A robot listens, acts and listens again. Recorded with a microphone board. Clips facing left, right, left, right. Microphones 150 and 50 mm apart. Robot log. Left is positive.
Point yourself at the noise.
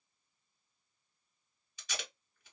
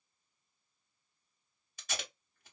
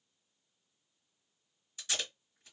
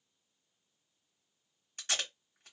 note: The tape being pulled: about 45° right or 135° right.
cmd yaw -45
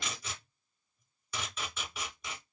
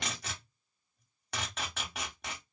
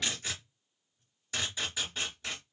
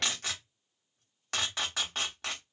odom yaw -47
note: So it is at 80° right.
cmd yaw -80
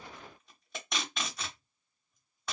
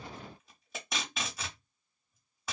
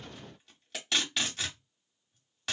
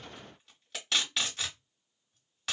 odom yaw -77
end: Found it: tape being pulled, straight ahead.